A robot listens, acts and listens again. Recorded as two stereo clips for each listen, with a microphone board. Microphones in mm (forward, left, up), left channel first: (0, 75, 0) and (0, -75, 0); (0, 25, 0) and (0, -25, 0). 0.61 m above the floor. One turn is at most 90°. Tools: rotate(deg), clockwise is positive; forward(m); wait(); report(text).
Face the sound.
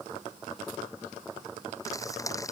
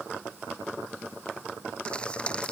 rotate(-20)
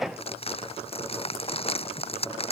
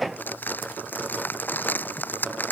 rotate(-90)
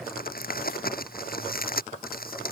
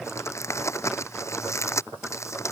rotate(-80)
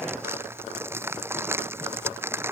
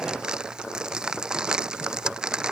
rotate(15)
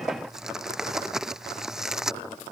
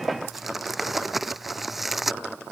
report("Found it: crumpling, straight ahead.")